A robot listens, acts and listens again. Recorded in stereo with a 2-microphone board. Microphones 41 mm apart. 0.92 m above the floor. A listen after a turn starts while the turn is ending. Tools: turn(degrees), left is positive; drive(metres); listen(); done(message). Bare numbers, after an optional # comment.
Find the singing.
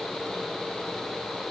listen()
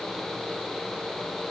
listen()
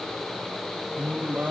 # The singing: about 40° right or 140° right.
turn(-40)
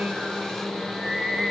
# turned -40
done("Found it: singing, straight ahead.")